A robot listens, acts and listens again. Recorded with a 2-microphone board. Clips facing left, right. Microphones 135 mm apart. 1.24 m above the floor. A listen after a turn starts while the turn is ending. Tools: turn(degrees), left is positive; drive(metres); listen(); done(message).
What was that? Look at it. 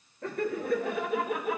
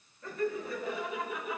turn(degrees=60)
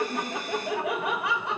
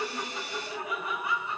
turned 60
turn(degrees=80)
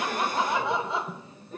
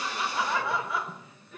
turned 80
turn(degrees=40)
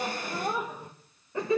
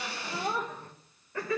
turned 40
turn(degrees=25)
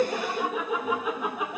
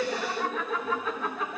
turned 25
turn(degrees=15)
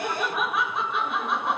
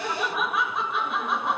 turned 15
done("Found it: laughter, straight ahead, 1 to 2 m away.")